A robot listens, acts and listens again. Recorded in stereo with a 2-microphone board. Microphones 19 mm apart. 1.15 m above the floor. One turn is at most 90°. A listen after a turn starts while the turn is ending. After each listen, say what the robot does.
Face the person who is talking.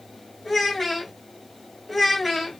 Turn 30° left.
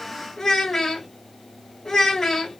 Turn 90° left.
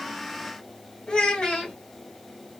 Turn 65° left.
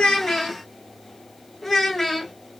Turn 15° left.
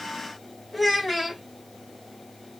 Found it: a child speaking, straight ahead.